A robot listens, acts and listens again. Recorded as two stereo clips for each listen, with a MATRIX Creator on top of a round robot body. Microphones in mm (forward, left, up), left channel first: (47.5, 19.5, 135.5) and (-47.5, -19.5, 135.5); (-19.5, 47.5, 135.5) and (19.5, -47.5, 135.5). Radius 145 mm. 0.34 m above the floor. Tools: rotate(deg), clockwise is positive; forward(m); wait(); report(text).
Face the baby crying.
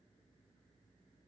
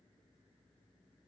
wait()
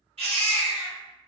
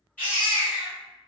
rotate(175)
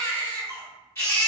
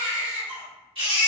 rotate(40)
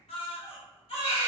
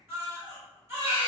report("Facing the baby crying.")